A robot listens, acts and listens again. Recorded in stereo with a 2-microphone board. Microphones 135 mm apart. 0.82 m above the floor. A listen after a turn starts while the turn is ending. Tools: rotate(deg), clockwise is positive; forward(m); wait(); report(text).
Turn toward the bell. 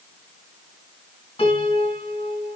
wait()
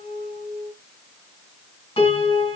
wait()
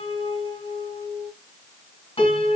report("I can't make out a bell, only a piano.")